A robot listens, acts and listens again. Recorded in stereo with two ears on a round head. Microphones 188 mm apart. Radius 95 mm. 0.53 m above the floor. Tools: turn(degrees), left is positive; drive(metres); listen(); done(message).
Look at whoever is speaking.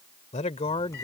turn(degrees=25)
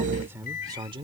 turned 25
turn(degrees=-25)
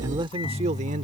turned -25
turn(degrees=-30)
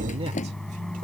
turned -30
listen()
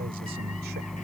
listen()
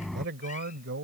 turn(degrees=-55)
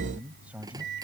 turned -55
done("Found it: a man speaking, straight ahead.")